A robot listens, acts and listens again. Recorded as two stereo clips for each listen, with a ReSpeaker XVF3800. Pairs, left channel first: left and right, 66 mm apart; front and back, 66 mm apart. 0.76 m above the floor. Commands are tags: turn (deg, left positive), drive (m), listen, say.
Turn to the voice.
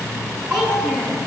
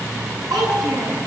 <turn deg="-165"/>
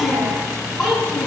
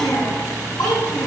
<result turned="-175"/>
<turn deg="10"/>
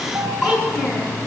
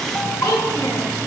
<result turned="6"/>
<say>Found it: a child speaking, straight ahead, over 4 m away.</say>